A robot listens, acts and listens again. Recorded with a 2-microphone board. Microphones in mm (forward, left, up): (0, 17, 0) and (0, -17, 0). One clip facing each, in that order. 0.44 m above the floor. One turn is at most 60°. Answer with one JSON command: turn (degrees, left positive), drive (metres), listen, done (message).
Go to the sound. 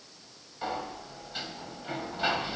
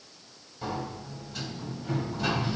{"turn": 35}
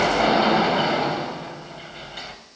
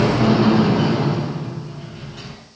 {"turn": 60}
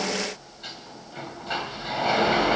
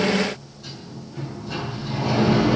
{"turn": 55}
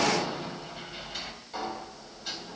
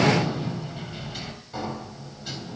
{"drive": 1.0}
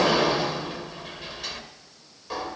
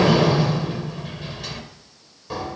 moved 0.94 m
{"drive": 1.0}
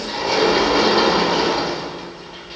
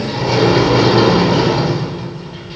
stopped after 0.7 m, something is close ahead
{"done": "I am next to the sliding door."}